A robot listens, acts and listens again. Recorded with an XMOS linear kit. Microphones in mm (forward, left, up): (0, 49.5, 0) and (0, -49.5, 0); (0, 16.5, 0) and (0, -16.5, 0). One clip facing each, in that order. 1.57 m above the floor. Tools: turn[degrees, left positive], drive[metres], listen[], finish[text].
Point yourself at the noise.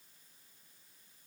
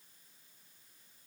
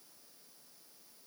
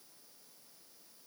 Action: listen[]
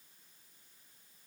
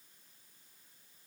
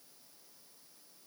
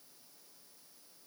Action: listen[]
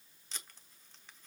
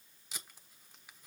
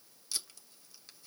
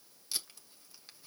Action: turn[-30]
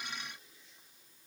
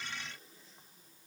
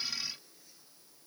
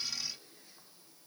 Action: listen[]
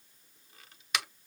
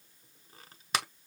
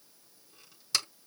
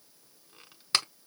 Thought: So it is at 140° right.
Action: turn[-140]
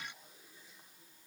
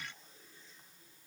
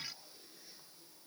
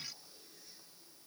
Action: listen[]
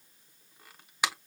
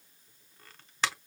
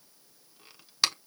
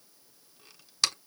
Thought: The tape being pulled is now 10° left.
Action: turn[10]
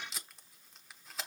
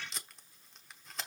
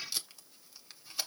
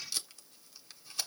Action: finish[Facing the tape being pulled, 1 to 2 m away.]